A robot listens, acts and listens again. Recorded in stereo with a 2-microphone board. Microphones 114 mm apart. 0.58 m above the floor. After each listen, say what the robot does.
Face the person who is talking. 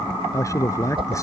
Turn 25° left.
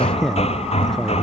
Facing the man speaking.